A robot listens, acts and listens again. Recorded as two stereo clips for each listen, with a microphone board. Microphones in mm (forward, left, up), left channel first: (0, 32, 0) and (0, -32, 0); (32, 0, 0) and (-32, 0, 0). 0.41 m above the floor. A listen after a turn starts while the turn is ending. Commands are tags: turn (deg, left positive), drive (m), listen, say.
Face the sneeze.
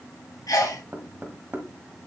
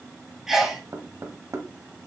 <turn deg="100"/>
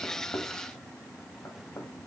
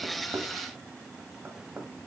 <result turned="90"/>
<turn deg="10"/>
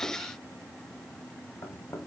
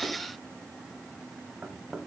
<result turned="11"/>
<say>I heard a sneeze from this way, but can't make it out now.</say>